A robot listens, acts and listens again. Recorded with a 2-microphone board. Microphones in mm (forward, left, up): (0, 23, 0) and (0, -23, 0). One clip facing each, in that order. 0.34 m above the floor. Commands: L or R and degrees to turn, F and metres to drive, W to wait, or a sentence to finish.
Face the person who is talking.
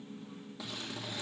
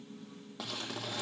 W
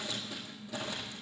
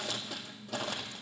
W
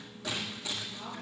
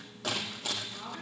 R25
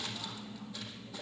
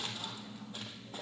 R130
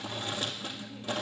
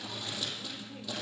W
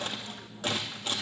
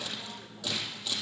W
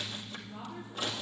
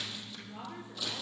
R45
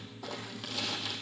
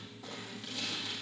W
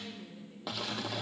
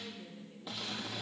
W
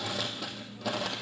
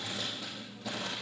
I heard a woman speaking from this way, but can't make it out now.